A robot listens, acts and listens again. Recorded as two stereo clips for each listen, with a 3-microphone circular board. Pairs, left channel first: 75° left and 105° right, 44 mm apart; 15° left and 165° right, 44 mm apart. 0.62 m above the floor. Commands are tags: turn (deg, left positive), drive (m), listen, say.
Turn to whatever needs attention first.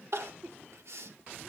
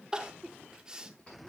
<turn deg="-95"/>
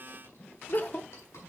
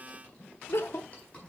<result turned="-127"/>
<turn deg="30"/>
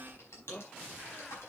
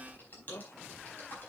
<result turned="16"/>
<turn deg="15"/>
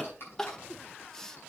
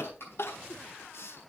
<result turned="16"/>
<say>Found it: crying, straight ahead.</say>